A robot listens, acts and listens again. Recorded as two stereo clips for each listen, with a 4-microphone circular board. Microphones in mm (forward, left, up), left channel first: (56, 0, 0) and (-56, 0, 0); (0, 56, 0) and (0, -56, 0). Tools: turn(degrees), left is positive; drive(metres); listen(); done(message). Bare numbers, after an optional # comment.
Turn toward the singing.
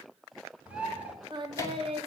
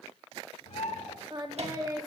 # The singing: 150° right.
turn(-150)
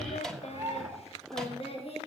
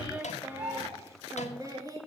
# The singing is now 35° right.
turn(-35)
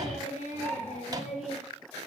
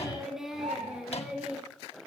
# The singing is now 10° right.
turn(-10)
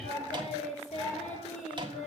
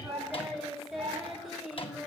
done("Facing the singing, 2 to 4 m away.")